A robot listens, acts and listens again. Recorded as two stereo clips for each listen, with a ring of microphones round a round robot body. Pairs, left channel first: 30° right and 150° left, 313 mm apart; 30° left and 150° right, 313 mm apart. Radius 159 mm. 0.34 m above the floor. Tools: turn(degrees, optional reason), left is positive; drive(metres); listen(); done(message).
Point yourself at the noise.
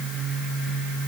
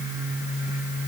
listen()
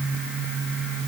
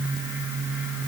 listen()
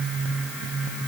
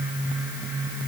done("I can't make out anything to turn to.")